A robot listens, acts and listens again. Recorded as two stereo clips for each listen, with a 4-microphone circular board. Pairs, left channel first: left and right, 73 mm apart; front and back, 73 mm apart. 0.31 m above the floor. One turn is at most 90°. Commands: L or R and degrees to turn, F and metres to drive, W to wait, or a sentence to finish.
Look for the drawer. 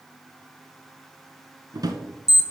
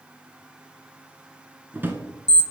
R90
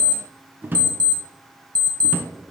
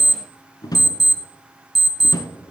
R25
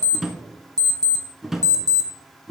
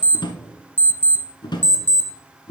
Found it: a drawer, straight ahead, under 1 m away.